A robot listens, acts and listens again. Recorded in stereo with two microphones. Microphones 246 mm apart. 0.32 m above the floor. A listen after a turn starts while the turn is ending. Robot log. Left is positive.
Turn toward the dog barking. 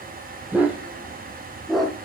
cmd yaw +30
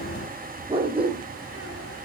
note: So it is at 20° right.
cmd yaw -20
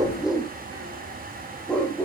end: Found it: a dog barking, straight ahead.